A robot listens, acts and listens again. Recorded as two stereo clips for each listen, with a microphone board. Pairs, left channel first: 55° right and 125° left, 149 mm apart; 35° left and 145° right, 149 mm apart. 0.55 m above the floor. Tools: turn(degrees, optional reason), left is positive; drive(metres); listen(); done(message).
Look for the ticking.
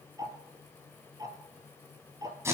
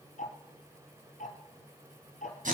turn(degrees=60, reason="The ticking: 60° left.")
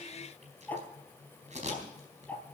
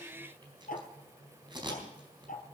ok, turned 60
turn(degrees=20, reason="The ticking is now 20° left.")
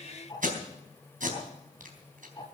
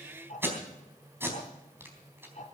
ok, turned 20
done("Facing the ticking, 2 to 4 m away.")